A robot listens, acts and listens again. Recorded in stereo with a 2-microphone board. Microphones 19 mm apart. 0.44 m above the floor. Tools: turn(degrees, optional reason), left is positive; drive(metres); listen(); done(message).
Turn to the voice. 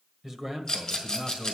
turn(degrees=-30)
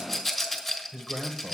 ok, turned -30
turn(degrees=-135, reason="So it is at 135° right.")
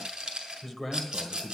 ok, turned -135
done("Found it: a man speaking, straight ahead, 1 to 2 m away.")